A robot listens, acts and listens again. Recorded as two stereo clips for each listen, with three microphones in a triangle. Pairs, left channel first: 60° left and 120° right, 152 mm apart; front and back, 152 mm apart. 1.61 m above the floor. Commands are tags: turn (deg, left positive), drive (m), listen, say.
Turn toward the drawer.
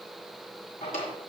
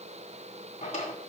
<turn deg="35"/>
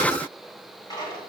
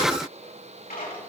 <say>Found it: a drawer, straight ahead.</say>